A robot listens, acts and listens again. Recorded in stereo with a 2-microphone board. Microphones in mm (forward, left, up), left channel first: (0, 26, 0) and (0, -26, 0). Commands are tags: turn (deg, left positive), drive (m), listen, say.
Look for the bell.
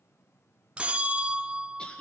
<turn deg="-20"/>
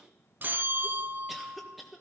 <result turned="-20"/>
<turn deg="-140"/>
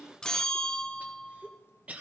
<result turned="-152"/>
<turn deg="15"/>
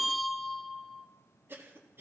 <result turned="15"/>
<say>Found it: a bell, straight ahead, under 1 m away.</say>